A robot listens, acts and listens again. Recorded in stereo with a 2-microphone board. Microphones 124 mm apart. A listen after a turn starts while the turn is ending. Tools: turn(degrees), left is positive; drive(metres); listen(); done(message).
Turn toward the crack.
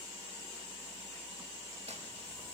listen()
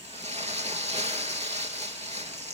listen()
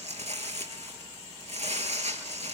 done("I can't make out a crack to turn to.")